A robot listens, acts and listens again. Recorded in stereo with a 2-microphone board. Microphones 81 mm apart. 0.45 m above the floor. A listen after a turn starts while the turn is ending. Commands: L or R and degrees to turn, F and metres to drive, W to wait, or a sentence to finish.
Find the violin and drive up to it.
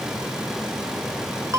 W
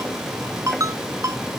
W
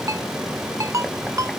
I can't make out a violin, only a ringtone.